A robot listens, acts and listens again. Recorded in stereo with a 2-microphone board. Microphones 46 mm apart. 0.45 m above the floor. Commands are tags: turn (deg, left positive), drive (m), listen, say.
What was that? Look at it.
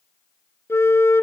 <turn deg="90"/>
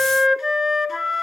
<say>Found it: a flute, straight ahead.</say>